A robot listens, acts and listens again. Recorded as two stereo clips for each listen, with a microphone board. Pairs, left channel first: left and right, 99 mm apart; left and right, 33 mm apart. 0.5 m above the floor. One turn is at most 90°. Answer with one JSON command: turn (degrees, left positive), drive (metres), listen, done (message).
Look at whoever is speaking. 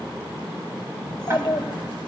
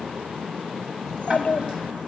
{"turn": 55}
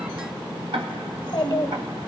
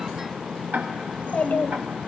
{"turn": 65}
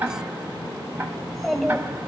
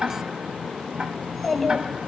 {"done": "Facing the child speaking, 1 to 2 m away."}